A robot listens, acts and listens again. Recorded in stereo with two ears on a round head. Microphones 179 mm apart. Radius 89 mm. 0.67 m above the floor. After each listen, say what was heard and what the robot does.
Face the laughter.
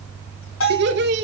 The laughter: about 60° right or 120° right. Turn 60° right.
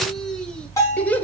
So it is at 10° left. Turn 10° left.
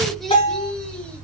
Found it: laughter, straight ahead, 2 to 4 m away.